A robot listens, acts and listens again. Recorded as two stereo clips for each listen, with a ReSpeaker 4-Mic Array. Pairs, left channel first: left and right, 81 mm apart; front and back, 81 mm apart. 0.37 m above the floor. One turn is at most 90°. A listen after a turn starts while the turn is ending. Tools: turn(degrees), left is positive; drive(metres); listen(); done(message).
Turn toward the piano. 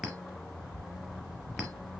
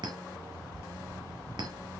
listen()
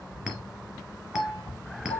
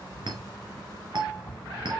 turn(degrees=90)
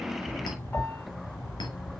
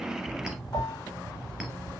turn(degrees=25)
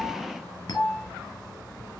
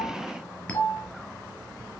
done("Facing the piano, 1 to 2 m away.")